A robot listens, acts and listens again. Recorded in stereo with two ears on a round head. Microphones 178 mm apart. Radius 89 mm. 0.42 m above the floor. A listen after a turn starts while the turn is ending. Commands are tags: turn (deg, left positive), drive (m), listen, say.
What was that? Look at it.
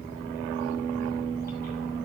<listen/>
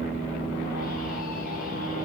<listen/>
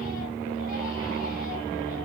<say>I can't make out anything.</say>